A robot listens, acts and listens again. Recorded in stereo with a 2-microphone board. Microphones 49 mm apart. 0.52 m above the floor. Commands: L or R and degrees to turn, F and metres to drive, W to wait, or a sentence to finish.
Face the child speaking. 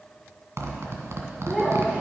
R15
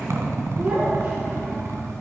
R35
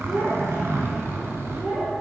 R105
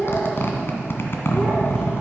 L15
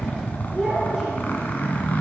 Found it: a child speaking, straight ahead, over 4 m away.